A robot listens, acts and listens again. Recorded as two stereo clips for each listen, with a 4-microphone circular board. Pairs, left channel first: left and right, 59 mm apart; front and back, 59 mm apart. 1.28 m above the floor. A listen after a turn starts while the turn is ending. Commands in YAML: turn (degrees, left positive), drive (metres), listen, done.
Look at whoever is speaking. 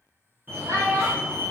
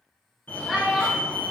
turn: -95
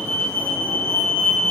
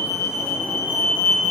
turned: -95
listen: true
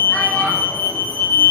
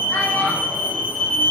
listen: true
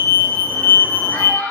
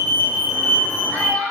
turn: 60
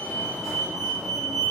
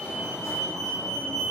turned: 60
listen: true
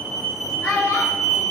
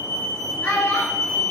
done: "Facing the child speaking, 2 to 4 m away."